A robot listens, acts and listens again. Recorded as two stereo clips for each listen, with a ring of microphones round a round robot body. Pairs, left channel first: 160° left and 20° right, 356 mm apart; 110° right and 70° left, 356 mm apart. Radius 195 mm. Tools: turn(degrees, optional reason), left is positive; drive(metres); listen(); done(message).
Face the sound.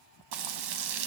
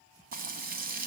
done("Facing the frying.")